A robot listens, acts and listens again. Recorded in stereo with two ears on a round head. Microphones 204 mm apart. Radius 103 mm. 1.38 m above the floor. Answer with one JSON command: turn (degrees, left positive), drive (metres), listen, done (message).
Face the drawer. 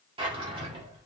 {"turn": -25}
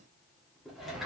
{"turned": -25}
{"done": "Facing the drawer, 1 to 2 m away."}